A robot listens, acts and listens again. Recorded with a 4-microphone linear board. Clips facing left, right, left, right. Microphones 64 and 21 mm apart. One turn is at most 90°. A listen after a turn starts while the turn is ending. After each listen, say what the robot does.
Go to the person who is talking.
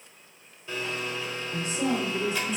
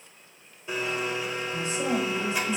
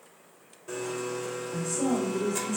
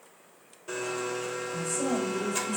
Turn 55° left.
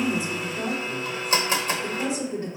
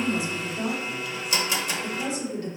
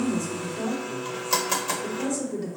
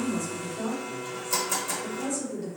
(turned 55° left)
Turn 30° left.
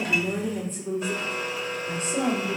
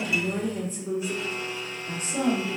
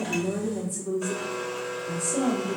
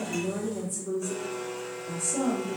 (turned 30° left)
Drive 1.0 m forward.
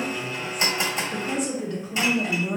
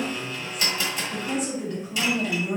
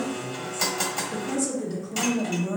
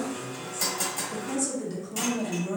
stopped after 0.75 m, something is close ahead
I am next to the woman speaking.